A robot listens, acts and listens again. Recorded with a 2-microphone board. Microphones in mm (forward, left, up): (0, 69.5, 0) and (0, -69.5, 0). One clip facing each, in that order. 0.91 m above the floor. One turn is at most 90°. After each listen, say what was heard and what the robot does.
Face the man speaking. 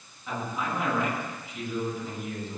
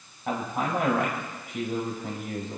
The man speaking: about 50° right or 130° right. Turn 50° right.
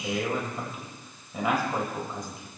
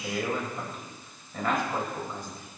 So it is at 15° left. Turn 15° left.
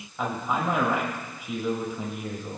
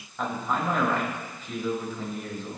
The man speaking is now 15° left. Turn 15° left.
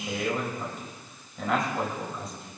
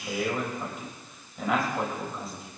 Found it: a man speaking, straight ahead.